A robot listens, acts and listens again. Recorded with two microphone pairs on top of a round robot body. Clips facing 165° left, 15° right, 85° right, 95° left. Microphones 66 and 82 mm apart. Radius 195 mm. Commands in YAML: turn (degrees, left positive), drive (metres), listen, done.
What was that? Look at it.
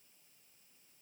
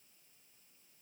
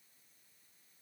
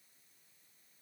listen: true
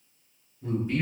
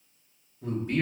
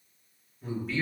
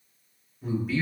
turn: 10
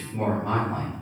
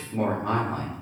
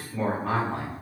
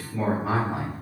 turn: 15
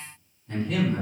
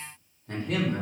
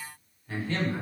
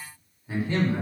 turn: 25
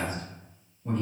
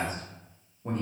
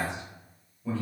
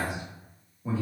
turn: 20
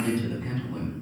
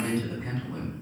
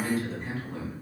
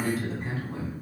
turn: 10
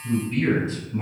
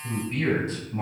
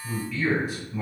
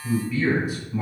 done: "Facing the man speaking."